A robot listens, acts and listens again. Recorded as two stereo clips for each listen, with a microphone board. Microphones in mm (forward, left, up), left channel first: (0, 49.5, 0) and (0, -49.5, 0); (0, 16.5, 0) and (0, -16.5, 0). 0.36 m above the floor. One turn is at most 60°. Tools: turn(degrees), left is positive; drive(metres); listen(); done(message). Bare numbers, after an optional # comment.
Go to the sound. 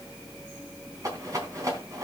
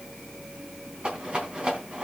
# The rattle: about 40° right or 140° right.
turn(-40)
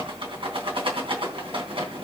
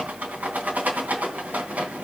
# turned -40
# So it is at 100° right.
turn(-60)
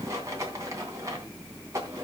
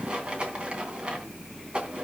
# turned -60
# The rattle is now 35° right.
turn(-35)
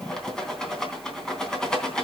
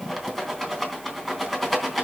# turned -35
drive(1.0)
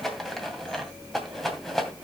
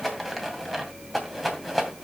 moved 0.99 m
drive(1.0)
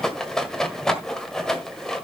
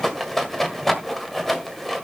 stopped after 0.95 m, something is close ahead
done("Arrived at the rattle, straight ahead.")